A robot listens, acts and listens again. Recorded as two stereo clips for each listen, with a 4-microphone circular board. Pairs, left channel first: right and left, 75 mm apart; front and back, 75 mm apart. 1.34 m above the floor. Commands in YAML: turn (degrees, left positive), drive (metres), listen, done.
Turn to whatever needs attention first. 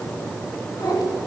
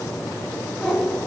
listen: true
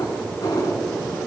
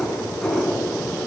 listen: true
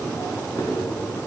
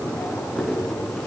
done: "I can't make out anything urgent, only a cat meowing."